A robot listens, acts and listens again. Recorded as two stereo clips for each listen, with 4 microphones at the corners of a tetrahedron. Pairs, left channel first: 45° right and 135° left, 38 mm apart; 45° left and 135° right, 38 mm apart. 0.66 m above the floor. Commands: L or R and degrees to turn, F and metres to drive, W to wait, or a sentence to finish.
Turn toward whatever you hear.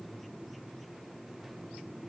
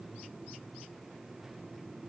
W
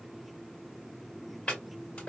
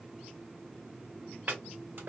R95
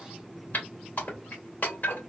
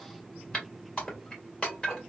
R15
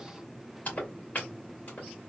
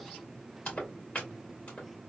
Facing the chopping.